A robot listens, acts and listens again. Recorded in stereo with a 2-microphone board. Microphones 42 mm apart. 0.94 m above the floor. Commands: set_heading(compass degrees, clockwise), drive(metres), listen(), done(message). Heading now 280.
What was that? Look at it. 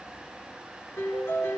set_heading(190)
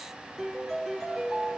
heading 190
set_heading(175)
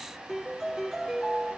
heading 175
done("Found it: a piano, straight ahead, over 4 m away.")